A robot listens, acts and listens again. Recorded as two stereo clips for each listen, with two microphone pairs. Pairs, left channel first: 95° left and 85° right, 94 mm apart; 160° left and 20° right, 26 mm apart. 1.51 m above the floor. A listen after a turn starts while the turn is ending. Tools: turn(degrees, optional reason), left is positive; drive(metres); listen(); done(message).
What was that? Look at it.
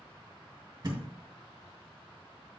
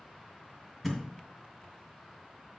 turn(degrees=-115, reason="The thud: 115° right.")
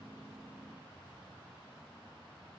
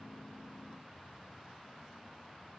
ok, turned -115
done("Facing where the thud came from. I can't hear it now.")